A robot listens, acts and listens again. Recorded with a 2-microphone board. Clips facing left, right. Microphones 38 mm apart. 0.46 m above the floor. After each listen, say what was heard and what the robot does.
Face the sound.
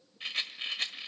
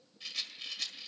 The rattle: about 45° left or 135° left. Turn 45° left.
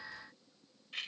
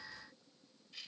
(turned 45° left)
So it is at 80° left. Turn 80° left.
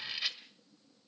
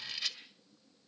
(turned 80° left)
The rattle is now 20° left. Turn 20° left.
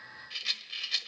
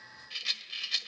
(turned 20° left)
Facing the rattle, 1 to 2 m away.